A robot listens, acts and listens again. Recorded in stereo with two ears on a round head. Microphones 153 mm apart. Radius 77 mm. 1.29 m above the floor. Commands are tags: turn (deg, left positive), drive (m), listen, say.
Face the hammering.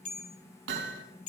<turn deg="-90"/>
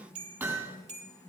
<turn deg="-15"/>
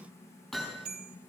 <say>Facing the hammering.</say>